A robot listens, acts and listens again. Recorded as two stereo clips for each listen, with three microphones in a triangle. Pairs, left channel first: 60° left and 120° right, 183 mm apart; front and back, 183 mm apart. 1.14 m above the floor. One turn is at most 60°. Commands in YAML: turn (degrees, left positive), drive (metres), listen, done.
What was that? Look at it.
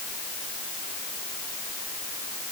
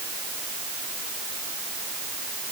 listen: true
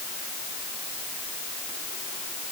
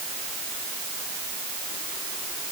listen: true
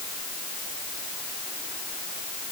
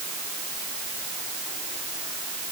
done: "I can't make out anything."